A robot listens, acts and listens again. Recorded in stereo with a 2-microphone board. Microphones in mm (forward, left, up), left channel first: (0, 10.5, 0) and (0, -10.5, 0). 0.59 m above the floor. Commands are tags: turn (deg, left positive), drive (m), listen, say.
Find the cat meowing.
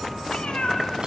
<turn deg="65"/>
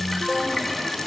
<listen/>
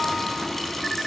<listen/>
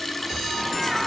<say>Facing the cat meowing.</say>